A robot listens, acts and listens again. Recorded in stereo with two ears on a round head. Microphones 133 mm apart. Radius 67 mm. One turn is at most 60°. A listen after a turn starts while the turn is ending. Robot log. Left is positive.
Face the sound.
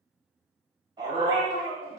note: The dog barking: about 25° right or 155° right.
cmd yaw -25
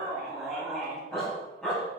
end: Facing the dog barking, 2 to 4 m away.